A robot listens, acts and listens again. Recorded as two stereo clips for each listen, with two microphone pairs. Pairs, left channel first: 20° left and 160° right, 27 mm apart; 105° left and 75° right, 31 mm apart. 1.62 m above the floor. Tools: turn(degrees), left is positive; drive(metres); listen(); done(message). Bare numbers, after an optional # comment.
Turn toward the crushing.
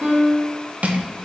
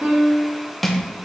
# The crushing: 175° right.
turn(-175)
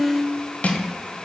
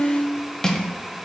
# The crushing is now 40° left.
turn(40)
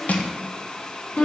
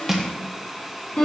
done("Found it: crushing, straight ahead.")